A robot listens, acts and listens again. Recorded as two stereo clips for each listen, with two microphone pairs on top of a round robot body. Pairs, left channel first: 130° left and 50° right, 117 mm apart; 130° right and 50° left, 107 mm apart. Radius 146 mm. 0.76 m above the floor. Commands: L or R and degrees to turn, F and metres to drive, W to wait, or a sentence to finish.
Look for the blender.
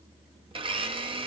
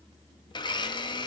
R85
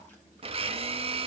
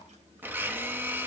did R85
R20
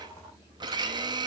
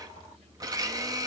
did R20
Facing the blender.